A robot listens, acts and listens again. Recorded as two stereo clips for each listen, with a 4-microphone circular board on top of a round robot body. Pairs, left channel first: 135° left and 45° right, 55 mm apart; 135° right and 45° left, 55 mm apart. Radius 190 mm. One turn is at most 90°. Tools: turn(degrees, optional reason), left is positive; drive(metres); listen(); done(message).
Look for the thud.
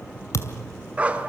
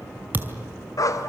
turn(degrees=90, reason="The thud: 105° left.")
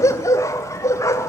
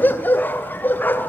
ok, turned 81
turn(degrees=20, reason="Nothing new. It was at 20° left.")
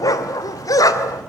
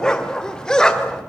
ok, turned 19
done("Facing where the thud came from. I can't hear it now.")